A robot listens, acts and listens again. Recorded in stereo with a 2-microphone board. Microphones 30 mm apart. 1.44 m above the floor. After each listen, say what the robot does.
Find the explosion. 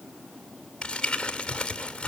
Keep listening.
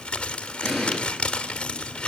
Turn 30° right.
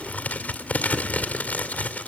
Keep listening.
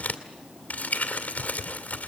I heard an explosion, but can't make it out now. It was about 25° left or 145° right.